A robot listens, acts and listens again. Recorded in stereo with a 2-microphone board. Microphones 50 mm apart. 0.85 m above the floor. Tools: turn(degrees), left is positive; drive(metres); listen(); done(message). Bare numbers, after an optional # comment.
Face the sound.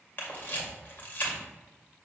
# The camera shutter: about 40° left or 140° left.
turn(40)
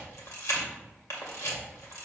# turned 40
# So it is at 100° left.
turn(100)
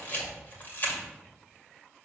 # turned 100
# The camera shutter is now 40° left.
turn(40)
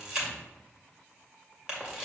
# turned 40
# The camera shutter is now 20° right.
turn(-20)
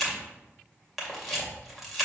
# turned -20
done("Facing the camera shutter, 2 to 4 m away.")